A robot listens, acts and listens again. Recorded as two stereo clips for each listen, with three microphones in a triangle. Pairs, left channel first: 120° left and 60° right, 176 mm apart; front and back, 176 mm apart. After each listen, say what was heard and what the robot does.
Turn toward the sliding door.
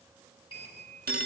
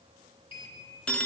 The sliding door: 60° left. Turn 60° left.
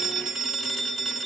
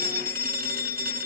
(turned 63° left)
Keep listening.
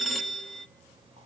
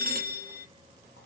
Found it: a sliding door, straight ahead.